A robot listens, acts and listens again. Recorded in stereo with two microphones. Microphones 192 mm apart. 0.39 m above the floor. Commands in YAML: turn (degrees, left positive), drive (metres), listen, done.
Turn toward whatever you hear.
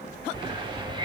turn: -25
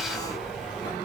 done: "Found it: a hiss, straight ahead."